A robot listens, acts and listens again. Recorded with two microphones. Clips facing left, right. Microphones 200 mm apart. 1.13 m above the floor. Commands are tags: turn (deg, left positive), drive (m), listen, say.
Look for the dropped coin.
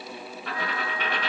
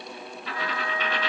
<turn deg="55"/>
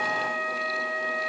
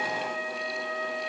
<listen/>
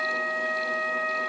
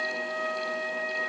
<say>I heard a dropped coin, but can't make it out now. It was about straight ahead or 70° left.</say>